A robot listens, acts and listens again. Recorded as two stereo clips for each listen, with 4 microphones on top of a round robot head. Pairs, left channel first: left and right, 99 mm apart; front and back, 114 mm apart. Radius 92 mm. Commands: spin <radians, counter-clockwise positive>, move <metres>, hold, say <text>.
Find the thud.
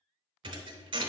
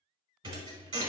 spin -2.27
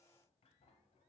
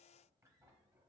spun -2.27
say I heard a thud from this way, but can't make it out now.